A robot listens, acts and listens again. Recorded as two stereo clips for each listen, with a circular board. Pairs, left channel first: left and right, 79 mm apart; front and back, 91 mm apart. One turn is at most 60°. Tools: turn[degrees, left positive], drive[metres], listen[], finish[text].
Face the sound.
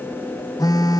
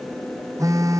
Thought: The phone buzzing: 125° left.
Action: turn[60]
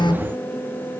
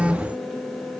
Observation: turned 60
Thought: The phone buzzing is now 100° left.
Action: turn[60]
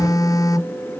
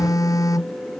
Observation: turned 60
Thought: The phone buzzing is now 50° left.
Action: turn[50]
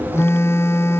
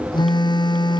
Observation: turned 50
Thought: The phone buzzing is now 35° left.
Action: turn[35]
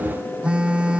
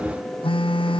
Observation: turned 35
Thought: The phone buzzing is now 15° right.
Action: turn[-15]
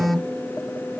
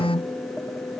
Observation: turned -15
Action: finish[Found it: a phone buzzing, straight ahead.]